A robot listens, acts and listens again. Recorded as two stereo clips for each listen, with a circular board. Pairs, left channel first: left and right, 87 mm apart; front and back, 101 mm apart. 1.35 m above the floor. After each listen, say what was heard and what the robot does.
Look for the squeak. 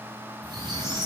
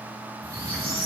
The squeak: 125° right. Turn 125° right.
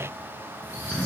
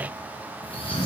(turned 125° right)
The squeak is now 20° right. Turn 20° right.
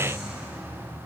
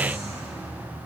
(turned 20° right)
Facing the squeak.